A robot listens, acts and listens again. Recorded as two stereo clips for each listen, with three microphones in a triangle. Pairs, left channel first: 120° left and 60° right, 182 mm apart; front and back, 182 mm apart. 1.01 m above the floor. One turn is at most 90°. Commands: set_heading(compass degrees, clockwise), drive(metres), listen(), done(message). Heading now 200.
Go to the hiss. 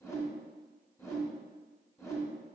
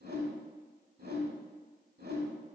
listen()
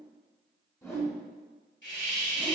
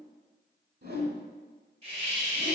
set_heading(110)
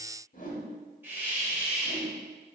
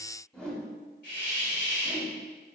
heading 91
set_heading(71)
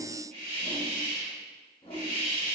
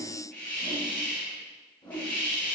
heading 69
drive(1.0)
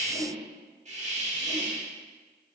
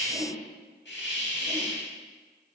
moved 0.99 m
set_heading(79)
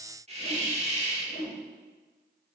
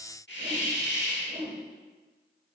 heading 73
drive(1.0)
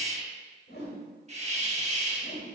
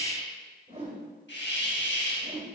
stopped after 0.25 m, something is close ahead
done("Arrived at the hiss, straight ahead.")